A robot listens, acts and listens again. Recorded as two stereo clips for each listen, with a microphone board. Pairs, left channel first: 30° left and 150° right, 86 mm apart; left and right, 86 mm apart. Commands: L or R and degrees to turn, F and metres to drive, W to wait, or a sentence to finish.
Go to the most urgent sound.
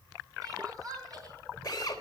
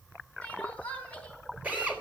L165
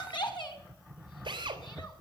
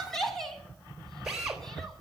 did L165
F1.0
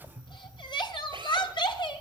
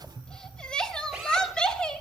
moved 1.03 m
L10
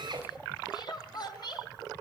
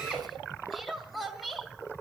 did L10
F1.0
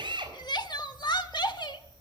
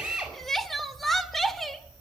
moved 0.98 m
F1.0
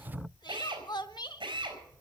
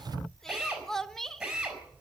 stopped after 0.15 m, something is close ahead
Arrived at the crying, straight ahead.